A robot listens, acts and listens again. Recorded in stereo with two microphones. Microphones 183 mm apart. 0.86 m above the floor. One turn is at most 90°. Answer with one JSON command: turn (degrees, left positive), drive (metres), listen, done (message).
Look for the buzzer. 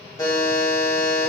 {"turn": 20}
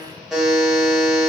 {"done": "Facing the buzzer, under 1 m away."}